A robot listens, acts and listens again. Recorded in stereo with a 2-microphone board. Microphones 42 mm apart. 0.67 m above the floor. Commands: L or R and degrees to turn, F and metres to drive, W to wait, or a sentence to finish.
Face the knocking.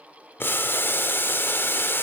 W
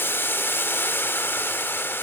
W
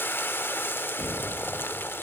L90
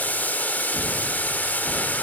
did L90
W
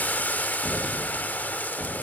Facing the knocking.